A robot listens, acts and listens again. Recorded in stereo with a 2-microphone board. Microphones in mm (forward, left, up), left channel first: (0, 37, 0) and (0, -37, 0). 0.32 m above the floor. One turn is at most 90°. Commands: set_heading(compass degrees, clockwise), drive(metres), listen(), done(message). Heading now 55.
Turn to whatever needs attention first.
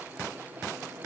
listen()
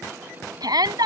set_heading(120)
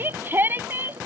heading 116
set_heading(151)
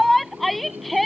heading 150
done("Found it: a shout, straight ahead.")